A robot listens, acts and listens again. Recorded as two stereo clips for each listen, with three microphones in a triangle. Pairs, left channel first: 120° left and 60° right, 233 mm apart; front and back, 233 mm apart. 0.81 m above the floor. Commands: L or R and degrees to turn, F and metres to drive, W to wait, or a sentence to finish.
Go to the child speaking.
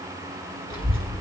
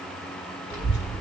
L155
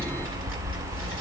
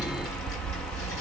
R25
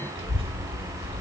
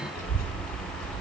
F1.0
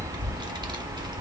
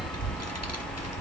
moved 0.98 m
L10
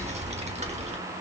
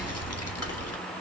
F1.0
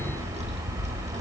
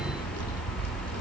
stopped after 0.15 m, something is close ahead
Arrived at the child speaking, straight ahead.